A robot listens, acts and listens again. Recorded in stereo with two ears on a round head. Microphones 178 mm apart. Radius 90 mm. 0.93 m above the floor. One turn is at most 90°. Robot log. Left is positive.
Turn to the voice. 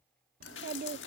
note: The child speaking: about 50° right or 130° right.
cmd yaw -50
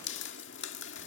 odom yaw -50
cmd idle
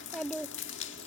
end: Facing the child speaking.